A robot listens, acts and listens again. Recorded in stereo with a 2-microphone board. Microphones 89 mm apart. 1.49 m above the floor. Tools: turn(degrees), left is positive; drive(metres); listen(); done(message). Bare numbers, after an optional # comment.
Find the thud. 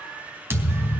# The thud: about 25° right or 155° right.
turn(-25)
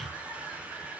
listen()
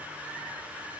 done("I heard a thud, but can't make it out now. It was about straight ahead or 130° right.")